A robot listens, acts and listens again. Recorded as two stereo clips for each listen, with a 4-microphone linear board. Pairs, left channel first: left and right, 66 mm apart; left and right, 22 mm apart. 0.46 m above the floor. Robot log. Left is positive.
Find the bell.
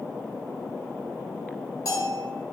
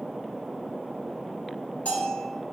note: The bell: about 70° left or 110° left.
cmd yaw +70
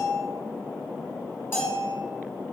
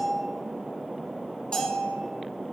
note: So it is at 35° left.
cmd yaw +35
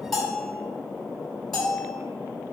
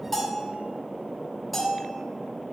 end: Found it: a bell, straight ahead.